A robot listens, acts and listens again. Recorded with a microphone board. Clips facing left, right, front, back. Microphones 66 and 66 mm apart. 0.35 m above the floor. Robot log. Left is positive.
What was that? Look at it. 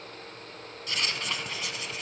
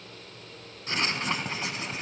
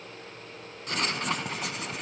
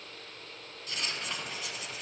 note: The writing: 30° right.
cmd yaw -30
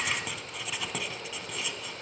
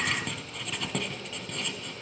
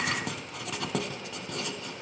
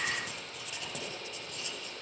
end: Facing the writing.